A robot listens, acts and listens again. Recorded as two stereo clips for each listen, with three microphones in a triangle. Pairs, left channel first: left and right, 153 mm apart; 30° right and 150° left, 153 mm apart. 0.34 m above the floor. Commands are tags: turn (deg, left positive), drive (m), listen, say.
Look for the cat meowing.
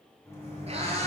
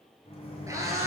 <turn deg="-140"/>
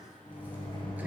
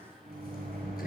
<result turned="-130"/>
<turn deg="-10"/>
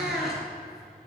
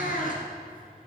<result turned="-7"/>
<say>Found it: a cat meowing, straight ahead.</say>